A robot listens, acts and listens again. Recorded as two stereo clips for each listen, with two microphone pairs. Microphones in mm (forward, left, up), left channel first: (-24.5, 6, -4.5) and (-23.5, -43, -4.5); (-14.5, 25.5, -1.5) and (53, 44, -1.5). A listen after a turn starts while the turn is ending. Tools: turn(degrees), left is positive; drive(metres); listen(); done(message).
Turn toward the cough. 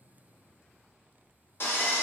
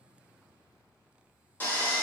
listen()
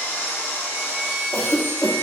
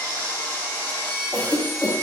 turn(degrees=100)
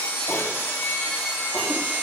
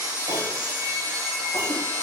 listen()
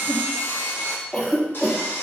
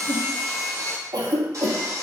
turn(degrees=20)
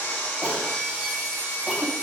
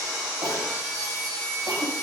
listen()
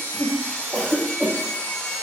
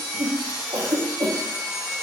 done("Facing the cough, under 1 m away.")